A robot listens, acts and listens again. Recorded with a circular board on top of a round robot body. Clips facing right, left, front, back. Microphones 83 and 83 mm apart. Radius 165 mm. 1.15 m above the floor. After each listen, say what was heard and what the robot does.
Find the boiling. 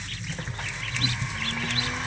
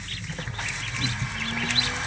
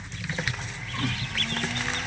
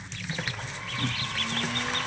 Keep listening.
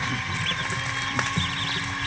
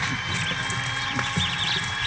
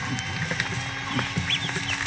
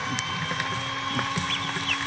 Keep listening.
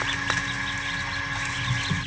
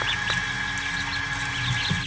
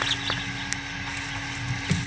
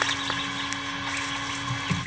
I can't make out boiling to turn to.